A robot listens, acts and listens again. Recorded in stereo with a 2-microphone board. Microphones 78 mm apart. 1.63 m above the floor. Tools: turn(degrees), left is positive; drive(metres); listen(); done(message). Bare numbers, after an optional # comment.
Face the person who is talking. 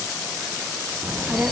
# The child speaking: about 20° right or 160° right.
turn(-20)
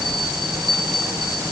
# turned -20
# So it is at 140° right.
turn(-140)
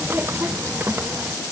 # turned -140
# The child speaking is now 30° right.
turn(-30)
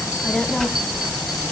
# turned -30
done("Facing the child speaking, under 1 m away.")